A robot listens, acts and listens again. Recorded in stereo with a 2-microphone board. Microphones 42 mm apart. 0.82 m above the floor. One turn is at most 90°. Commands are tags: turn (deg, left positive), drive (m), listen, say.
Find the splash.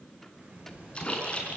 <turn deg="25"/>
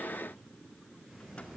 <listen/>
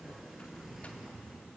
<say>I heard a splash, but can't make it out now. It was about straight ahead or 130° left.</say>